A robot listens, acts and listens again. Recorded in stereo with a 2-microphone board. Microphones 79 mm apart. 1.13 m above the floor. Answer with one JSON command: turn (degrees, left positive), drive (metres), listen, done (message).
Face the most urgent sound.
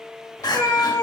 {"turn": 60}
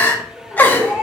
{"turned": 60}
{"turn": 25}
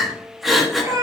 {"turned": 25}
{"done": "Facing the crying."}